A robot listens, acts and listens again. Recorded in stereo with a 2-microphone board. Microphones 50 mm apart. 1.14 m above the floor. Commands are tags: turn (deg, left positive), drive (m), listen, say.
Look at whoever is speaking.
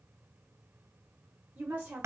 <turn deg="-35"/>
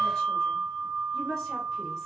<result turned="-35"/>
<say>Found it: a woman speaking, straight ahead.</say>